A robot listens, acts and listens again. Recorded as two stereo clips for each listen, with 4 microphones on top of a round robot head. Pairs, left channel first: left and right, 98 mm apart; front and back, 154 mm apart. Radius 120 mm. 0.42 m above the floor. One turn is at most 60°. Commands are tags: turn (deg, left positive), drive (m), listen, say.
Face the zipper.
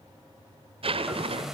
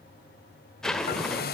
<turn deg="-60"/>
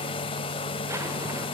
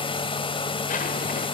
<turn deg="-30"/>
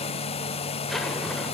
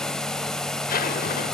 <say>Found it: a zipper, straight ahead.</say>